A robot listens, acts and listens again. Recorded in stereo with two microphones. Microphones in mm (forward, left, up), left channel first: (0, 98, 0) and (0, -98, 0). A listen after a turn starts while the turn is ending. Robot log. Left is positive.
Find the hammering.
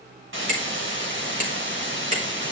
note: The hammering: about 40° right or 140° right.
cmd yaw -40
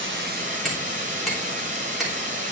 end: Facing the hammering, 2 to 4 m away.